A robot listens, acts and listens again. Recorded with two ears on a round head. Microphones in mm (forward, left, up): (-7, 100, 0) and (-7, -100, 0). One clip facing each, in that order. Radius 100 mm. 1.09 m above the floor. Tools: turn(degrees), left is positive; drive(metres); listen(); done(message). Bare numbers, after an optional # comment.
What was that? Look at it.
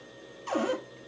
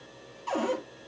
# The cupboard door: about 25° left or 155° left.
turn(25)
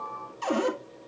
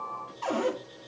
# So it is at 130° left.
turn(130)
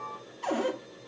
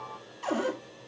done("Found it: a cupboard door, straight ahead.")